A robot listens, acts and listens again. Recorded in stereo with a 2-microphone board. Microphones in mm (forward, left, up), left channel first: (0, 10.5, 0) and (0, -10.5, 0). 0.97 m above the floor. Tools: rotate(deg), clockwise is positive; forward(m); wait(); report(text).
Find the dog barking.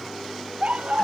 rotate(70)
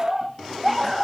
report("Found it: a dog barking, straight ahead.")